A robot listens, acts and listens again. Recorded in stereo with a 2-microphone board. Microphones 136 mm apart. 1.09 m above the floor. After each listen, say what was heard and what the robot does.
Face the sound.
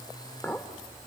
Turn 30° left.
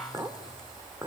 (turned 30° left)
So it is at 20° right. Turn 20° right.
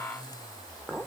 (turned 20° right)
Found it: a clink, straight ahead.